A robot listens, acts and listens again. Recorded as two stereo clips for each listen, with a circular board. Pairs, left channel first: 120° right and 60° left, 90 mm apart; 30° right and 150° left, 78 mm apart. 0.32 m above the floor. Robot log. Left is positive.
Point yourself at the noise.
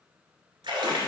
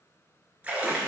note: The splash: 80° left.
cmd yaw +80
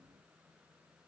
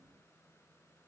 end: Facing where the splash came from. I can't hear it now.